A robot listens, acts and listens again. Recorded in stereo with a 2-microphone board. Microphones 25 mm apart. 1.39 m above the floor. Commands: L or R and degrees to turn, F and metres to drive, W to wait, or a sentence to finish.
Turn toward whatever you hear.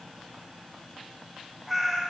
R30
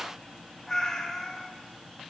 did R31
L20
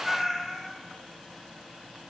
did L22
Facing the cat meowing, 2 to 4 m away.